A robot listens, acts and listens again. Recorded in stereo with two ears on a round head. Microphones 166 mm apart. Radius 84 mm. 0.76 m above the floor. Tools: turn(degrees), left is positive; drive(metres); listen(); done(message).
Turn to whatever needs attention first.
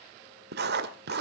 listen()
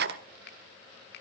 listen()
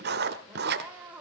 turn(degrees=-30)
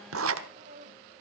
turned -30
turn(degrees=-140)
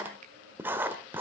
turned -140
listen()
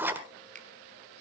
listen()
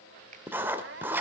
turn(degrees=-65)
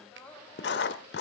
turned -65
done("Facing the crying.")